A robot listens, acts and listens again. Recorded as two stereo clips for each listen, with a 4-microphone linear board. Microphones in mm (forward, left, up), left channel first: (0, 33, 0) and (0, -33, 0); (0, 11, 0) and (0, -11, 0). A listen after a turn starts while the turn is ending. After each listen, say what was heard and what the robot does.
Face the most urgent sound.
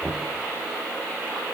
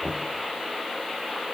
Keep listening.
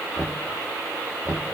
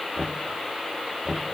Keep listening.
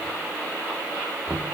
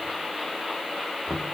I can't make out anything urgent to turn to.